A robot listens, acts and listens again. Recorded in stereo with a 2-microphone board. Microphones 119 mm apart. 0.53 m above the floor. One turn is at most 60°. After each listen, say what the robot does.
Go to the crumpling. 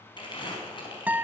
Turn 40° left.
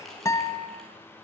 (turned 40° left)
Drive 1.0 m forward.
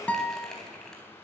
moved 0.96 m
Drive 1.0 m forward.
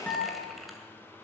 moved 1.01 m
Drive 1.0 m forward.
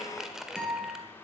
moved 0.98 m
Drive 1.0 m forward.
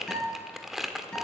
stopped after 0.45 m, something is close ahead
Arrived at the crumpling, straight ahead.